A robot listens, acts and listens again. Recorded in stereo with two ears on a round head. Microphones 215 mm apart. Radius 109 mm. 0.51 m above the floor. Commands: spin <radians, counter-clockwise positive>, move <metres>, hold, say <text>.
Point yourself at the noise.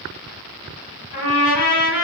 spin 1.13
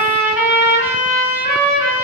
say Facing the trumpet.